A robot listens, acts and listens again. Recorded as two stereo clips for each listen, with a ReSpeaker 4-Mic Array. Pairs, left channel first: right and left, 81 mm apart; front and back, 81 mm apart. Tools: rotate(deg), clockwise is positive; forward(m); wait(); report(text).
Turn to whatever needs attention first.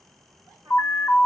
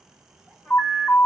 rotate(45)
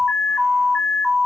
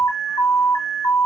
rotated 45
report("Facing the alarm, under 1 m away.")